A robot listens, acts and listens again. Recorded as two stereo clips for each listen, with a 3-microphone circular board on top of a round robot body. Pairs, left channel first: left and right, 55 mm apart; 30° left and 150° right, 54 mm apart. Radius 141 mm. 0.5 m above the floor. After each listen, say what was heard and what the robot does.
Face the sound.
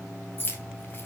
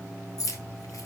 The keys jangling: 40° left. Turn 40° left.
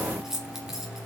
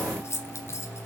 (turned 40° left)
Facing the keys jangling, 2 to 4 m away.